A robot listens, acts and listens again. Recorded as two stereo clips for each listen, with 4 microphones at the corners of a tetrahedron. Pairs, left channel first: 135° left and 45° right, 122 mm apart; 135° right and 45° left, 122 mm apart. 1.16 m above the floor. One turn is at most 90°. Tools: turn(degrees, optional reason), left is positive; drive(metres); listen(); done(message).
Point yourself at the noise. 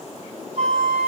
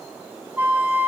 turn(degrees=-30, reason="The flute: 30° right.")
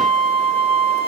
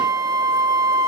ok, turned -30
turn(degrees=-10, reason="The flute is now 10° right.")
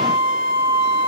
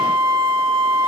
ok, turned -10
done("Facing the flute.")